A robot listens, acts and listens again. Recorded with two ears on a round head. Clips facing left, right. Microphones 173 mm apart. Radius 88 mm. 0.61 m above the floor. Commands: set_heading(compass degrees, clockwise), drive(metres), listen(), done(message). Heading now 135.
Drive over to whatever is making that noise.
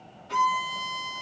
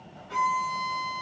set_heading(75)
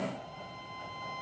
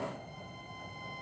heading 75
set_heading(30)
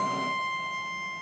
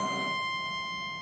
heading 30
drive(1.0)
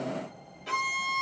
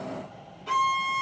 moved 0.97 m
set_heading(20)
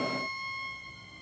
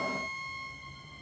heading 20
drive(1.0)
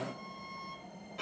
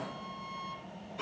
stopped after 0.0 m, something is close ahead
done("Arrived at the violin, straight ahead.")